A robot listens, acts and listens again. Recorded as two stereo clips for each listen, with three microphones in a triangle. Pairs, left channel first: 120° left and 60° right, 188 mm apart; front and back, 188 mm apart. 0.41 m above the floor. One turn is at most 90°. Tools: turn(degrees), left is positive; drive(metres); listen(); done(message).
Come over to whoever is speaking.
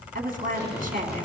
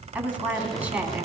turn(degrees=-90)
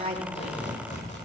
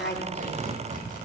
turn(degrees=-10)
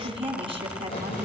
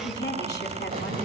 drive(metres=1.0)
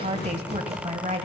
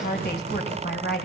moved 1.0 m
turn(degrees=-10)
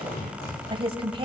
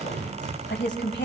drive(metres=1.0)
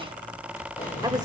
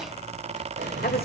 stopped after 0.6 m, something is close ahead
listen()
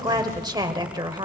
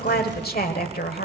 done("I am next to the woman speaking.")